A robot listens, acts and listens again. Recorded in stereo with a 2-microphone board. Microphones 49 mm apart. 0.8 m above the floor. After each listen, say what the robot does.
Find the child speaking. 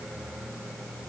Keep listening.
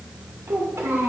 Turn 90° right.
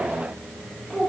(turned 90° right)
Turn 15° left.
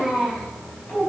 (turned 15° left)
Turn 10° left.
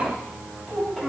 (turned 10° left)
Found it: a child speaking, straight ahead.